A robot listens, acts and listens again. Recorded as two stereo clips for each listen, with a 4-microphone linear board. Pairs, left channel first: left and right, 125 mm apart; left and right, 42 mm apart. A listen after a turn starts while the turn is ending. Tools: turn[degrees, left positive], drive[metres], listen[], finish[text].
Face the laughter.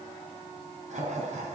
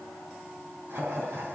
Thought: The laughter: about 75° right or 105° right.
Action: turn[-75]
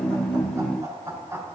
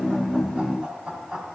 Thought: So it is at 20° right.
Action: turn[-20]
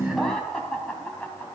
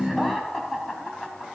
Thought: The laughter is now 10° left.
Action: turn[10]
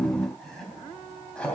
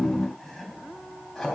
Thought: The laughter is now 10° left.
Action: turn[10]
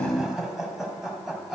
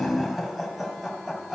Action: finish[Found it: laughter, straight ahead.]